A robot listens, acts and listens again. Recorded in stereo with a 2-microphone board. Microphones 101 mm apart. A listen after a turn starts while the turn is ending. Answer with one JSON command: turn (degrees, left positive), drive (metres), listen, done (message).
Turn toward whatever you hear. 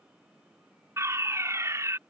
{"turn": -30}
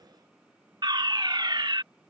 {"turn": -115}
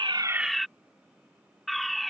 {"done": "Facing the fire alarm."}